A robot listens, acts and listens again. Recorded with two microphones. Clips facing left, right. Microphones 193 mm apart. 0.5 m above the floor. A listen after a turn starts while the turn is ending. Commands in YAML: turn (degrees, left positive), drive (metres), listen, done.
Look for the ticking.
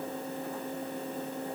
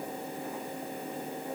listen: true
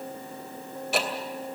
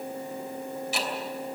turn: 65
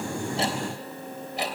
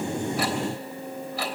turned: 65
turn: 25
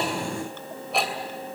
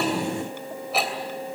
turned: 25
done: "Facing the ticking."